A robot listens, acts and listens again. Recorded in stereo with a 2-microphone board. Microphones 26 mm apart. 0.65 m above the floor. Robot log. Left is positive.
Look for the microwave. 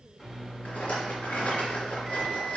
note: The microwave: about 20° left or 160° left.
cmd yaw +20
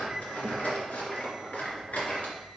cmd idle
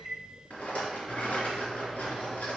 end: Facing the microwave, 2 to 4 m away.